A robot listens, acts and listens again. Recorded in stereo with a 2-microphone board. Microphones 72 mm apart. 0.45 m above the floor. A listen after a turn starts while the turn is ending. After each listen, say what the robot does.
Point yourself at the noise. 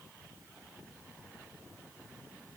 Keep listening.
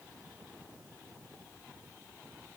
Keep listening.
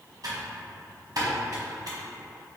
Turn 65° right.
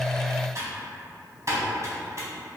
Turn 50° right.
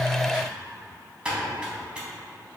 Turn 15° right.
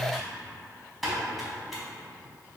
Facing the typing on a keyboard, 1 to 2 m away.